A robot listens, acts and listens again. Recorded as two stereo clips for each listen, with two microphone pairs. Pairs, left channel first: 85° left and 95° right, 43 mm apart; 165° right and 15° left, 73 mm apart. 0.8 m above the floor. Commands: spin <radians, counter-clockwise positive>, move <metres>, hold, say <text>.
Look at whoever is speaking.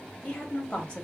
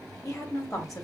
spin 2.71
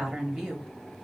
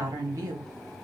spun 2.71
spin -0.17
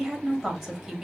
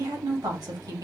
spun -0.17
say Found it: a woman speaking, straight ahead.